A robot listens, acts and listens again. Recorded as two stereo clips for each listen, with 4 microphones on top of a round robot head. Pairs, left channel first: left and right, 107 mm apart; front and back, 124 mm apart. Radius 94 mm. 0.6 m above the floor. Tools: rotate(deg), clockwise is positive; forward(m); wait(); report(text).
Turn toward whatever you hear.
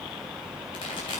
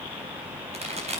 rotate(-145)
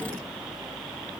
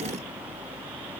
report("Facing where the pop came from. I can't hear it now.")